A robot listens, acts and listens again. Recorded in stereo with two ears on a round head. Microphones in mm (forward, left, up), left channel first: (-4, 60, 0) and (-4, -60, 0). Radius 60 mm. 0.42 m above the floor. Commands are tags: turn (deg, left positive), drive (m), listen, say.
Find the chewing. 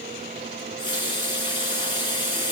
<listen/>
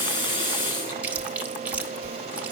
<turn deg="-30"/>
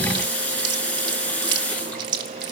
<turn deg="-140"/>
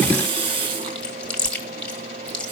<turn deg="10"/>
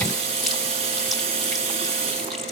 <listen/>
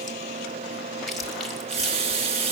<say>Found it: chewing, straight ahead.</say>